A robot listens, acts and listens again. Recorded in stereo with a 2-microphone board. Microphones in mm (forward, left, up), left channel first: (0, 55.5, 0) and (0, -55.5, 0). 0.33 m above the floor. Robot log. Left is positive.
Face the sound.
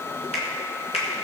note: The finger snap: about 70° left or 110° left.
cmd yaw +70
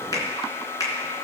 note: So it is at 35° left.
cmd yaw +35
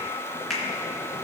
end: Found it: a finger snap, straight ahead.